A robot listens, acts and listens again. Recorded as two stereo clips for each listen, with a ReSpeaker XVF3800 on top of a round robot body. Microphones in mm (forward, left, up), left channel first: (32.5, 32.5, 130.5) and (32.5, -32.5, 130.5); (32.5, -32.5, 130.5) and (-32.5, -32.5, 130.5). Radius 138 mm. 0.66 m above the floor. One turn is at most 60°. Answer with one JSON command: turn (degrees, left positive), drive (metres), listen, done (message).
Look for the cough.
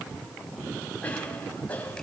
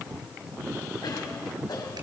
{"turn": 25}
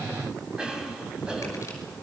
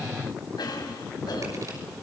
{"turn": -10}
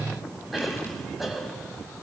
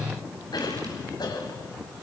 {"done": "Found it: a cough, straight ahead."}